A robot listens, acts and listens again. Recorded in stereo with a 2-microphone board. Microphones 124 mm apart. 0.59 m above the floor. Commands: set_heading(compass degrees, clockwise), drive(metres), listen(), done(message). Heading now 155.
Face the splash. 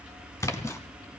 set_heading(130)
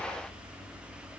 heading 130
listen()
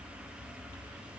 done("I heard a splash, but can't make it out now. It was about straight ahead or 130° left.")